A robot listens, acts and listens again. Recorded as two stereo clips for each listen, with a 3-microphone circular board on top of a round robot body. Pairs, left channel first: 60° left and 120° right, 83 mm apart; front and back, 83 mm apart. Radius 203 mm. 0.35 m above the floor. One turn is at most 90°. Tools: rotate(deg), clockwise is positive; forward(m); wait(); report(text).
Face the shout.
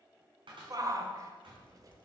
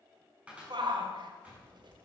rotate(90)
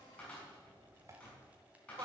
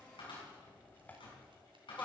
rotate(70)
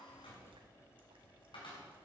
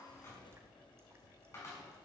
wait()
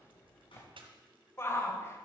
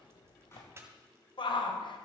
report("Found it: a shout, straight ahead.")